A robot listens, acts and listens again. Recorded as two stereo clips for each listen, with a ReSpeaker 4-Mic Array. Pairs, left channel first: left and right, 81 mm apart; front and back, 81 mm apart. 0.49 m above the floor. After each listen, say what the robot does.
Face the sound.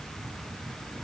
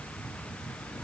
Keep listening.
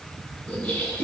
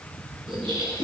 Turn 160° left.
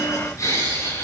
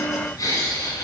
Turn 40° left.
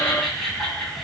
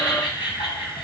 Found it: laughter, straight ahead, over 4 m away.